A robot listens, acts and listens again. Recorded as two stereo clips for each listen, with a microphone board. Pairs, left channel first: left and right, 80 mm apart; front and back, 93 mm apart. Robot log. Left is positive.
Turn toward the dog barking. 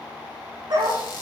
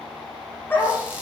note: The dog barking: 70° right.
cmd yaw -70
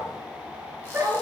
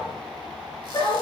note: The dog barking is now 35° right.
cmd yaw -35
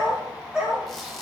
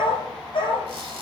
note: The dog barking is now 10° right.
cmd yaw -10
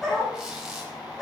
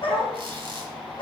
end: Found it: a dog barking, straight ahead, over 4 m away.